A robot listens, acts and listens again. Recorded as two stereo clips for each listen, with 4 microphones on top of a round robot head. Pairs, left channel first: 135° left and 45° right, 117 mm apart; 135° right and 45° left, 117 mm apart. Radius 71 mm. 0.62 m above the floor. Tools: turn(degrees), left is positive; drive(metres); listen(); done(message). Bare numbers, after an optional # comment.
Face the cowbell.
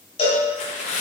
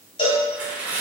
# The cowbell: straight behind.
turn(180)
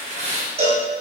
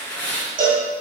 done("Found it: a cowbell, straight ahead, 1 to 2 m away.")